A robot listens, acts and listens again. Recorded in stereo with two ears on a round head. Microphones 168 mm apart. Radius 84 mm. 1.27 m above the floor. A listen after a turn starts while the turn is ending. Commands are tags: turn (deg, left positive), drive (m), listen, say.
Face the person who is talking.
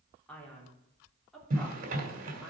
<turn deg="30"/>
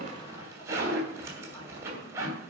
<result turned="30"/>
<listen/>
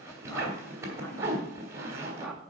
<turn deg="30"/>
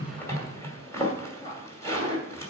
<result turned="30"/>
<turn deg="150"/>
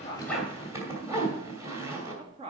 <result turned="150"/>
<turn deg="-30"/>
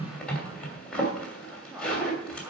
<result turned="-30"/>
<turn deg="-10"/>
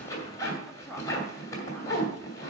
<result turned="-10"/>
<say>Facing the man speaking, 2 to 4 m away.</say>